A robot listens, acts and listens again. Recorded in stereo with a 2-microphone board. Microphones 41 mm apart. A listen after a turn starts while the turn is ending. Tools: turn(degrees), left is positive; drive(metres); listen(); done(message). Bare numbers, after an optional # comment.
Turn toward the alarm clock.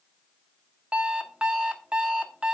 # The alarm clock: about 25° right or 155° right.
turn(-25)
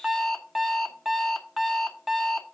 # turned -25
done("Found it: an alarm clock, straight ahead, under 1 m away.")